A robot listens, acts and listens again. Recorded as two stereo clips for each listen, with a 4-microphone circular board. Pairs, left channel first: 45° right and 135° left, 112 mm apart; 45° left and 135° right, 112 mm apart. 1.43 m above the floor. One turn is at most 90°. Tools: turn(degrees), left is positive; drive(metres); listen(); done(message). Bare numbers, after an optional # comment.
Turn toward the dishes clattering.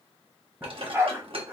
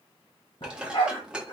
# The dishes clattering: 145° left.
turn(90)
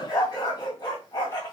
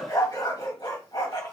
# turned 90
# Nothing new. It was at 55° left.
turn(55)
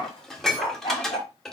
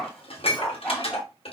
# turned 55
# The dishes clattering is now 40° left.
turn(40)
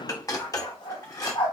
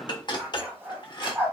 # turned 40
# The dishes clattering is now 10° left.
turn(10)
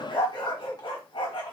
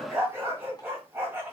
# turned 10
listen()
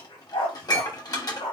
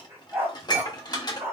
done("Facing the dishes clattering, 1 to 2 m away.")